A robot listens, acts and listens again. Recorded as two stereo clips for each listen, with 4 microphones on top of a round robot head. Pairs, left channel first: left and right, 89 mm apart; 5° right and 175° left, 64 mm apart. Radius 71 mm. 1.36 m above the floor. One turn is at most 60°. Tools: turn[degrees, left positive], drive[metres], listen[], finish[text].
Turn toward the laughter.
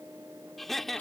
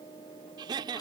Thought: The laughter: 175° left.
Action: turn[60]
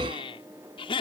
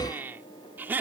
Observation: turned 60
Thought: The laughter is now 115° left.
Action: turn[60]
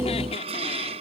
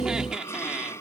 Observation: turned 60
Thought: Nothing new. It was at 55° left.
Action: turn[55]
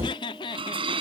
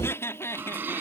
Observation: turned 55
Thought: The laughter is now 45° left.
Action: turn[45]
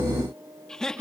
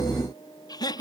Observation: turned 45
Action: finish[Found it: laughter, straight ahead.]